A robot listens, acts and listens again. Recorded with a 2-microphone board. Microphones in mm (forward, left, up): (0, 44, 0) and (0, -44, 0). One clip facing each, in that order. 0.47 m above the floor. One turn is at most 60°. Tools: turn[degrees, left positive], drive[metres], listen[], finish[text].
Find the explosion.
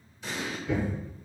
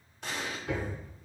Thought: The explosion: about 60° right or 120° right.
Action: turn[-60]
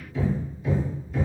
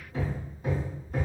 Action: listen[]
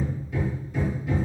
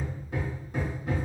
Action: finish[I heard an explosion, but can't make it out now. It was about straight ahead or 60° right.]